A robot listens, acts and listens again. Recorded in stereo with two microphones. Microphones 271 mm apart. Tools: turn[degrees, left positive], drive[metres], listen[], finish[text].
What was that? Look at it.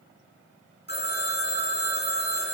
Thought: The phone ringing: about 40° left or 140° left.
Action: turn[40]
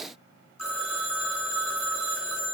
Thought: So it is at 105° left.
Action: turn[105]
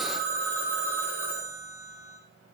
Thought: The phone ringing is now 10° right.
Action: turn[-10]
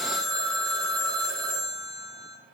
Action: finish[Found it: a phone ringing, straight ahead, 2 to 4 m away.]